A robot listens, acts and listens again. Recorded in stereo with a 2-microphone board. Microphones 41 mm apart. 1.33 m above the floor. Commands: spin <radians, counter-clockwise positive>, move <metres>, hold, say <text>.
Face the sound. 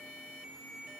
hold
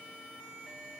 hold
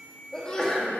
spin 0.26
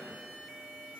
hold
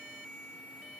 say I heard a sneeze, but can't make it out now. It was about straight ahead or 150° left.